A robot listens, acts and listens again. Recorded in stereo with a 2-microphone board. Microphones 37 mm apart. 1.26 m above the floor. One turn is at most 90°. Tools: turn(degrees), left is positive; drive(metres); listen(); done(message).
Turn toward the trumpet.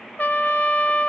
turn(degrees=50)
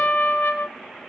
turn(degrees=80)
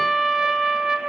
turn(degrees=-10)
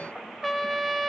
done("Found it: a trumpet, straight ahead, 1 to 2 m away.")